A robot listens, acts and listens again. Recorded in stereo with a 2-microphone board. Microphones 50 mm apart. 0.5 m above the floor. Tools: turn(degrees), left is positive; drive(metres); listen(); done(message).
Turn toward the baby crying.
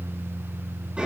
listen()
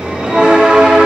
listen()
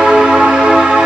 done("I can't make out a baby crying, only a bell.")